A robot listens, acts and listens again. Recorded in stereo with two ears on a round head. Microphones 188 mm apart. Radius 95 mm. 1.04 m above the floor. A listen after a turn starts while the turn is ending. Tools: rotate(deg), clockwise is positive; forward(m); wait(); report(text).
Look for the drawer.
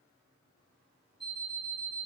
wait()
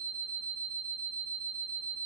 wait()
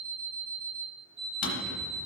rotate(-40)
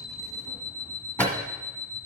rotate(-10)
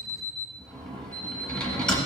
report("Facing the drawer.")